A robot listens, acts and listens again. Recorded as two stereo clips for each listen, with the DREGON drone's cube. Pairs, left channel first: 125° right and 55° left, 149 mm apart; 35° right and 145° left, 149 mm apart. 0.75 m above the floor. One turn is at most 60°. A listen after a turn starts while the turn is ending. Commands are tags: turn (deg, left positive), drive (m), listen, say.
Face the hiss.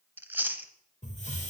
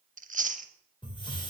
<turn deg="-60"/>
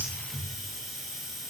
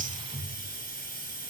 <turn deg="-35"/>
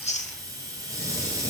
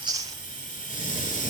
<turn deg="-15"/>
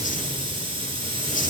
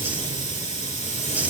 <say>Found it: a hiss, straight ahead.</say>